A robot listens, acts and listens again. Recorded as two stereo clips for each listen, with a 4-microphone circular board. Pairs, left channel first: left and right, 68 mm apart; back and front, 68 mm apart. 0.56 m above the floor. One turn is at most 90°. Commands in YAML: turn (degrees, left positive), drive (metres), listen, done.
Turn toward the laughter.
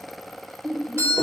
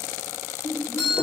turn: 90
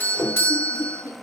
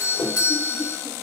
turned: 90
turn: 80
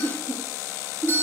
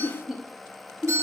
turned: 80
turn: -90
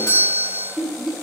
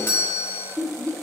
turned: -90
turn: -15
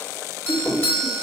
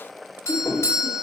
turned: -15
listen: true
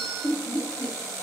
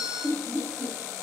done: "Found it: laughter, straight ahead."